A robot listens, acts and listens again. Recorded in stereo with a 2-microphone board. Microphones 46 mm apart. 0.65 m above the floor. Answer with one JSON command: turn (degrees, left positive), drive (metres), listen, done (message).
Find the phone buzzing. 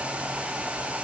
{"listen": true}
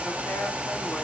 {"listen": true}
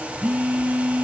{"turn": -30}
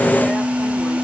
{"turn": -115}
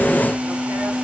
{"turn": -40}
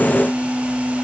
{"done": "Found it: a phone buzzing, straight ahead, 1 to 2 m away."}